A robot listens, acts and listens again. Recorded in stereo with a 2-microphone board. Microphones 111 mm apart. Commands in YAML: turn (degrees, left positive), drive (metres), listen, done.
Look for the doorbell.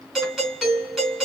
turn: -30
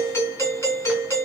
turn: 25
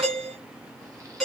done: "Found it: a doorbell, straight ahead."